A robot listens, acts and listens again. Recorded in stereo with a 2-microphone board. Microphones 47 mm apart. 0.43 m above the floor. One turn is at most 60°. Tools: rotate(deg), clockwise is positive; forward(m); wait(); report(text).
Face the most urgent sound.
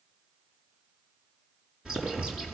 wait()
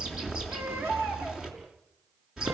rotate(60)
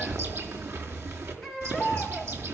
rotate(10)
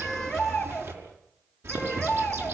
report("Facing the baby crying, over 4 m away.")